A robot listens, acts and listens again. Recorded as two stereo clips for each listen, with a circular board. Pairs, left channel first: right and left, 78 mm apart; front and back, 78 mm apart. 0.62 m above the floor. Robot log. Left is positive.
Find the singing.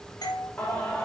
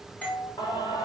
note: The singing: 15° right.
cmd yaw -15
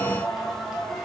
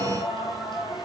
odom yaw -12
note: The singing is now 10° left.
cmd yaw +10
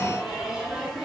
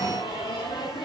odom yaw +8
note: The singing is now 10° left.
cmd yaw +10
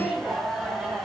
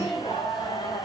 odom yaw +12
note: The singing is now 10° left.
cmd yaw +10
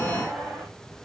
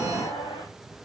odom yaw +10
end: Facing the singing, 2 to 4 m away.